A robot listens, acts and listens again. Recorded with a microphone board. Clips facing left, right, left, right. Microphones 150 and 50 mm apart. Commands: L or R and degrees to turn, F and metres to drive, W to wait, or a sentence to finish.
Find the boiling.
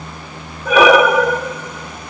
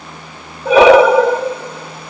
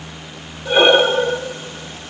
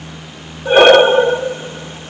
W
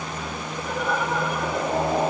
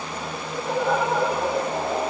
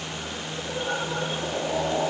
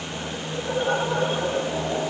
L30
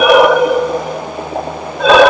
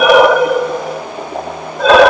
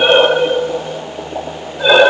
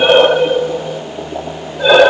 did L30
Found it: boiling, straight ahead, over 4 m away.